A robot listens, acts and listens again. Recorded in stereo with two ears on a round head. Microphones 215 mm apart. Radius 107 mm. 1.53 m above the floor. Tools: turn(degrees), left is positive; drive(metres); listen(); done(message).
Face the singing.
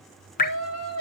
turn(degrees=70)
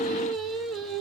done("Facing the singing, 2 to 4 m away.")